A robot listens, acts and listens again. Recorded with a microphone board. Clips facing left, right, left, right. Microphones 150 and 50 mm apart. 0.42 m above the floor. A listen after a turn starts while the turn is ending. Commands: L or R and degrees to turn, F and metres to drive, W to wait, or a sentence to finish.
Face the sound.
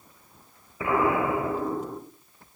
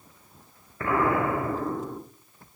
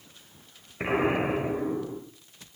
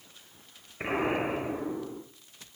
L30
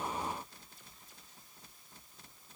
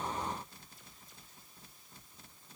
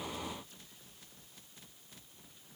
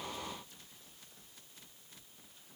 W
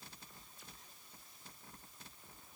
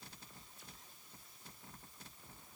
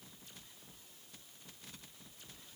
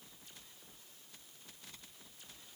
I heard an explosion, but can't make it out now. It was about 20° right or 140° left.